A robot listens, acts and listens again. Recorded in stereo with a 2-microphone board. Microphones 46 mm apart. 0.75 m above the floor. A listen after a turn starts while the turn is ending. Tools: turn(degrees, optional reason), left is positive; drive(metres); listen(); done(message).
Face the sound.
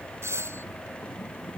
turn(degrees=-90)
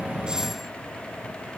listen()
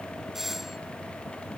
done("Facing the doorbell.")